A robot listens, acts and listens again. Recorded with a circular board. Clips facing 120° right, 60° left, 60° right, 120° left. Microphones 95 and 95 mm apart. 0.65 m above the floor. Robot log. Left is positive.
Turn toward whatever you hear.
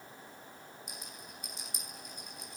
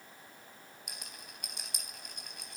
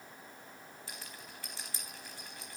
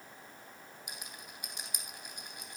note: The rattle: 45° left.
cmd yaw +45
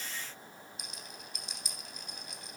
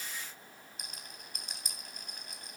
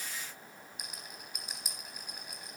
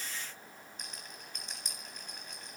note: The rattle is now 20° left.
cmd yaw +20
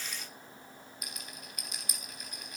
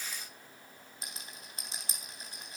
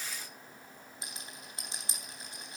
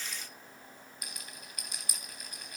end: Facing the rattle.